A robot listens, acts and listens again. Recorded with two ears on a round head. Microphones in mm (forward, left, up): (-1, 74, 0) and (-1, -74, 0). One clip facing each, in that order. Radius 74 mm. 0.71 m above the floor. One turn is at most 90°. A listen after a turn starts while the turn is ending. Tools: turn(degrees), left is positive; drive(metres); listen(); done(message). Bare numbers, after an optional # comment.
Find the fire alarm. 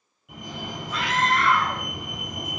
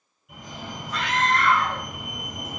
# The fire alarm: about 55° left or 125° left.
turn(55)
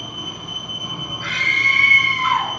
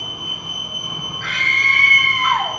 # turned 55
# So it is at 55° left.
turn(55)
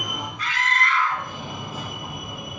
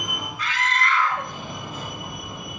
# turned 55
done("Facing the fire alarm.")